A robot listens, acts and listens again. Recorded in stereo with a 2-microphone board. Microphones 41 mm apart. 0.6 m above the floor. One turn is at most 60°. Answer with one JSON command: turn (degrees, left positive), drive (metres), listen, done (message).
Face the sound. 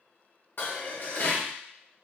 {"turn": 55}
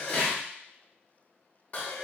{"turn": 45}
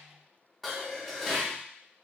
{"done": "Facing the dishes clattering, under 1 m away."}